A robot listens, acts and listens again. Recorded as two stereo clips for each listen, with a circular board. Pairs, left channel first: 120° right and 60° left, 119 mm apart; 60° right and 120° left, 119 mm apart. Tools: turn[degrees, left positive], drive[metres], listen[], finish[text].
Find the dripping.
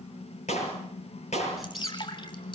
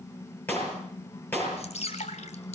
Thought: The dripping: 75° right.
Action: turn[-75]
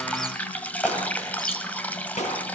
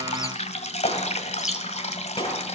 Thought: The dripping is now 45° right.
Action: turn[-45]
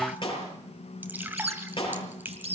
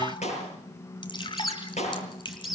Thought: The dripping is now 15° right.
Action: turn[-15]
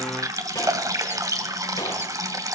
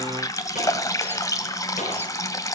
Action: finish[Facing the dripping, 2 to 4 m away.]